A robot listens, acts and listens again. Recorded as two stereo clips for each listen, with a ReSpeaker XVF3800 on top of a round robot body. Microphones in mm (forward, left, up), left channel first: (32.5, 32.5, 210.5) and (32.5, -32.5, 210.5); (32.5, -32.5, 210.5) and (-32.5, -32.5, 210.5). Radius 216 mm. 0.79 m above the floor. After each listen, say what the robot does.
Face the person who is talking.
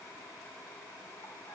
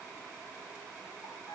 Keep listening.
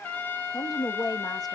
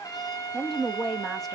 Turn 90° left.
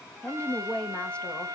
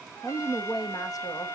Turn 20° left.
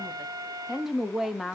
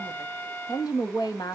Facing the woman speaking, 1 to 2 m away.